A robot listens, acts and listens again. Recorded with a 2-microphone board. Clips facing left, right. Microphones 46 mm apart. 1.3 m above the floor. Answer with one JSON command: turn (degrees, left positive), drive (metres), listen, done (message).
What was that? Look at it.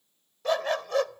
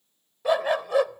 {"turn": -30}
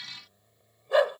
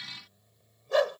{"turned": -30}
{"turn": 20}
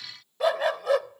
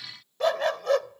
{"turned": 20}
{"turn": 10}
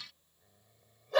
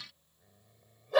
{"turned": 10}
{"done": "Facing the dog barking."}